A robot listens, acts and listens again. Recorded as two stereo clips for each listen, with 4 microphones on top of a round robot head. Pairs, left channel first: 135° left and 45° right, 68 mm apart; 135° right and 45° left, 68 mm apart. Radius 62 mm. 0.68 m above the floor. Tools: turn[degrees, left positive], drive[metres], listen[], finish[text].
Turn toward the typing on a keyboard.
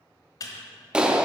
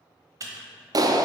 Thought: The typing on a keyboard: 95° left.
Action: turn[95]
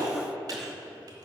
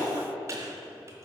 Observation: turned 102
Action: listen[]
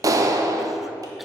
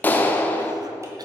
Action: listen[]
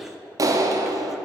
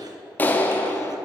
Action: finish[Facing where the typing on a keyboard came from. I can't hear it now.]